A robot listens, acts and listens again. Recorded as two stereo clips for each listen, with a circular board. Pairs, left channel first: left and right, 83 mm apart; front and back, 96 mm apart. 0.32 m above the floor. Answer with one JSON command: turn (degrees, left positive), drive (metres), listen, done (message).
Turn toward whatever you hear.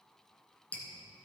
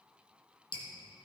{"turn": 20}
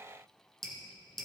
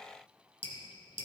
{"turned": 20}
{"done": "Found it: dripping, straight ahead."}